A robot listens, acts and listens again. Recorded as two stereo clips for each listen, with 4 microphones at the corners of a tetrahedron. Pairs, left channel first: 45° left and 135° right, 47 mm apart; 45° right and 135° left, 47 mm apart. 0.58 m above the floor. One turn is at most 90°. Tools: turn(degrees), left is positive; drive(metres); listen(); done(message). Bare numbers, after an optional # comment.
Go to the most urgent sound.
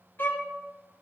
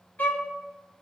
listen()
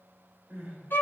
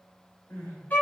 # The crying: 70° right.
turn(-70)
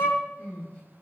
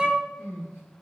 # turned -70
# The crying is now 15° right.
turn(-15)
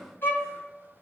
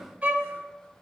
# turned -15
listen()
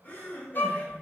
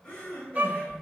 drive(1.0)
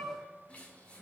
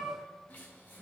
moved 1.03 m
listen()
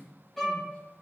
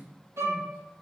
listen()
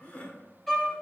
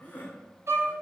drive(1.0)
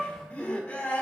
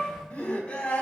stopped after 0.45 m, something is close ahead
# The crying is now 10° left.
turn(10)
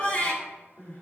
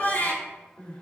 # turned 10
done("I am next to the crying.")